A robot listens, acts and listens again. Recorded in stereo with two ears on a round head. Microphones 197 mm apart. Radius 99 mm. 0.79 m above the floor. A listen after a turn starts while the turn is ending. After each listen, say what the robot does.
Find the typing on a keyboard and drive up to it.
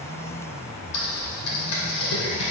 Turn 90° left.
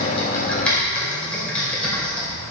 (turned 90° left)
Drive 1.0 m forward.
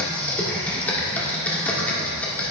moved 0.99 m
Drive 1.0 m forward.
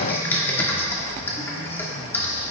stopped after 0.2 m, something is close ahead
Turn 10° left.
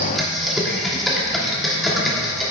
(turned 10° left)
I am next to the typing on a keyboard.